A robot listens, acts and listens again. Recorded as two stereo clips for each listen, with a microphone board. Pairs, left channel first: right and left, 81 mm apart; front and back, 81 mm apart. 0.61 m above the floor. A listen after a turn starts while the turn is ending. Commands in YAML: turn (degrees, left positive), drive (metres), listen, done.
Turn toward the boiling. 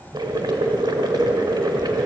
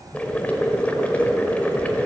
turn: 70
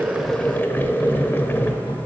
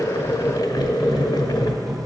turn: -25
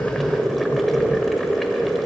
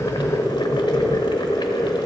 done: "Found it: boiling, straight ahead, 1 to 2 m away."